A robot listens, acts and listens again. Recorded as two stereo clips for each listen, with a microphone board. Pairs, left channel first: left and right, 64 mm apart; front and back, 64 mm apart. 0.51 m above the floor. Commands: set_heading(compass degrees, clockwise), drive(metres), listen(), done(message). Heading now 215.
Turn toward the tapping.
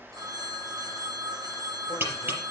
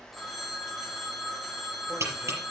set_heading(0)
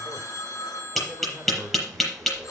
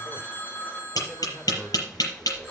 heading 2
done("Found it: tapping, straight ahead, over 4 m away.")